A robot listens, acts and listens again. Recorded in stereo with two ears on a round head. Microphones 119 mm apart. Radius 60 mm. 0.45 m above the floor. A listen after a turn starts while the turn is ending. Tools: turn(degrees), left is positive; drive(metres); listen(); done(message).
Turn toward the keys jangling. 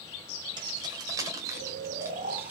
turn(degrees=-30)
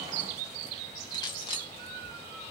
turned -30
turn(degrees=35)
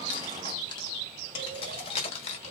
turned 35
turn(degrees=50)
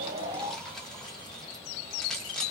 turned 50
done("Facing the keys jangling, 1 to 2 m away.")